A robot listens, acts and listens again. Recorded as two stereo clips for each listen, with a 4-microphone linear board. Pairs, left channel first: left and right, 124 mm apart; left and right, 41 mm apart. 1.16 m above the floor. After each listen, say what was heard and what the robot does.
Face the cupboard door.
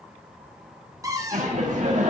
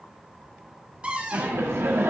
The cupboard door: about 25° right or 155° right. Turn 25° right.
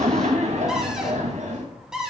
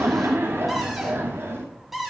Facing the cupboard door.